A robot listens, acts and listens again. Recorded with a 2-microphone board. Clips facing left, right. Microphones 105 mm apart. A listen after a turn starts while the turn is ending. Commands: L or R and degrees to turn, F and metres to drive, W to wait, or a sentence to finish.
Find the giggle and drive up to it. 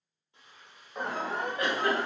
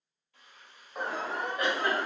R30
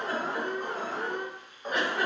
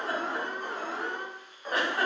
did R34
R135
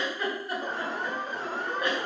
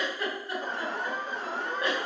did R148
L15
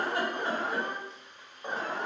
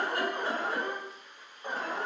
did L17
W
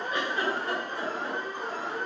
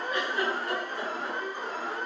F1.0
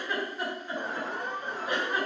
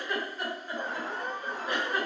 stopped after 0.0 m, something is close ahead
Blocked. The giggle is further on, straight ahead.